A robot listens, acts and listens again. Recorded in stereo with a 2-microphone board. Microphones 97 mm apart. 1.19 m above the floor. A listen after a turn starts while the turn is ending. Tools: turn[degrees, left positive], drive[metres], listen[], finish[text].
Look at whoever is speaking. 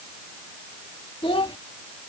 Thought: The child speaking: about 65° left or 115° left.
Action: turn[65]
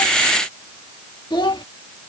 Thought: So it is at 50° left.
Action: turn[50]
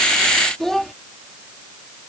Action: finish[Facing the child speaking.]